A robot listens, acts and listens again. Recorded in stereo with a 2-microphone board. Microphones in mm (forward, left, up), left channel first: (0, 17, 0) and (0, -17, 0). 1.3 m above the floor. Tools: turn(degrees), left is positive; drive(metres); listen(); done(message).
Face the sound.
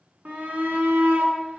turn(degrees=-60)
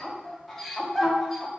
done("Facing the shout.")